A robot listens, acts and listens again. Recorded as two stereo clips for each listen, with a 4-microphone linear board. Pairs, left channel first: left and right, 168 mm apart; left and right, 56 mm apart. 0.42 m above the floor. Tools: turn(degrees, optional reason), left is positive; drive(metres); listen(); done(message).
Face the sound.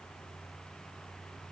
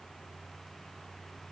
listen()
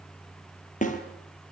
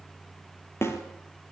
turn(degrees=50, reason="The snare drum: about 50° left or 130° left.")
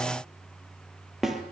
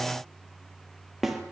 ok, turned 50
done("Found it: a snare drum, straight ahead, 2 to 4 m away.")